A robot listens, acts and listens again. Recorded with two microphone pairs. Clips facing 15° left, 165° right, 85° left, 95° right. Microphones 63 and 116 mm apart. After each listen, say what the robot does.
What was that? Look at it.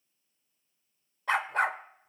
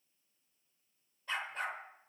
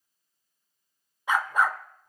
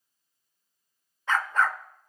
Found it: a dog barking, straight ahead.